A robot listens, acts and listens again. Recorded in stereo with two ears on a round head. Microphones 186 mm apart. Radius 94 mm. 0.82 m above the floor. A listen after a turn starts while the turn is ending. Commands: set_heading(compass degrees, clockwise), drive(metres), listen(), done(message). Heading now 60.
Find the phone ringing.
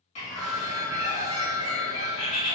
set_heading(30)
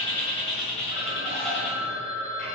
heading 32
set_heading(57)
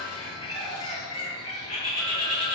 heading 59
listen()
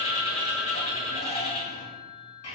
done("Found it: a phone ringing, straight ahead.")